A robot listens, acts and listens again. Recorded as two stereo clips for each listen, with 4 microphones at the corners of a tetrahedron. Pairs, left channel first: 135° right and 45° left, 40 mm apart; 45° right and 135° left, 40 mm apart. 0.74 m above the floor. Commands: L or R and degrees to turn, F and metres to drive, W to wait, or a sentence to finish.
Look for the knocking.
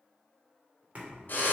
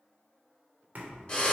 L90
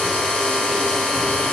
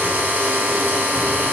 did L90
W
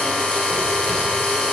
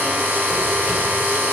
W
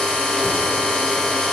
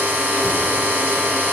I heard knocking from this way, but can't make it out now.